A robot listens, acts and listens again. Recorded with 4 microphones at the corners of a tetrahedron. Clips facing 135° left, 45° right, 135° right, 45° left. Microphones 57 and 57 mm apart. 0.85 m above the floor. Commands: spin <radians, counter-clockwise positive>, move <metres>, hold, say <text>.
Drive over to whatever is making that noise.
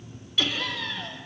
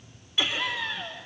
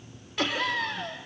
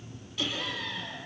spin -2.01
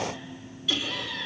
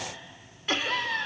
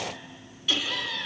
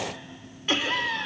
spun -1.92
move 1.0
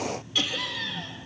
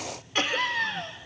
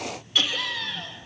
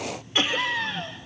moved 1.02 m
spin -0.17
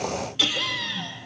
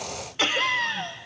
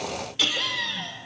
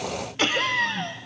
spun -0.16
move 1.0
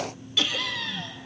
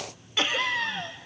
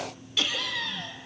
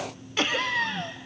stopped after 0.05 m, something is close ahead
say Arrived at the laughter, straight ahead.